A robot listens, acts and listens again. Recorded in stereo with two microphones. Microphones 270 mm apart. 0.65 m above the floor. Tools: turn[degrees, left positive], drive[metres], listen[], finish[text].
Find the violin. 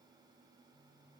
Action: listen[]
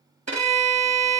Thought: The violin: about 70° right or 110° right.
Action: turn[-70]
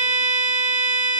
Thought: So it is at 30° right.
Action: turn[-30]
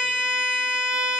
Action: finish[Facing the violin.]